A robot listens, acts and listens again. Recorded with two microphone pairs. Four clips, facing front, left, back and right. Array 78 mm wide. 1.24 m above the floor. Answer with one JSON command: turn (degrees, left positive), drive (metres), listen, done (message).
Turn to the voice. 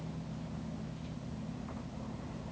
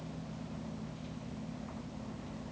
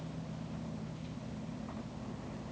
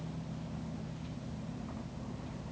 {"listen": true}
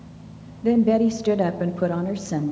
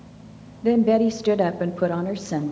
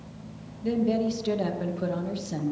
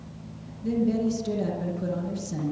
{"turn": 65}
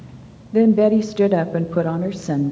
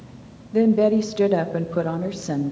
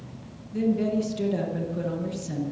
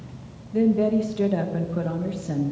{"turn": 20}
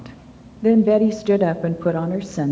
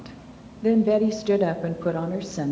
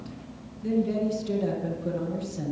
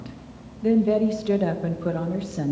{"done": "Facing the woman speaking, under 1 m away."}